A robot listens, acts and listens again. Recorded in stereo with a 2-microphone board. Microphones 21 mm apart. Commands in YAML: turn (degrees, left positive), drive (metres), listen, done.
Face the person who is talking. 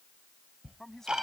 turn: 30
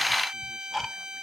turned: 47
listen: true
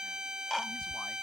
listen: true
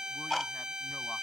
done: "I heard a man speaking, but can't make it out now. It was about 35° right or 120° left."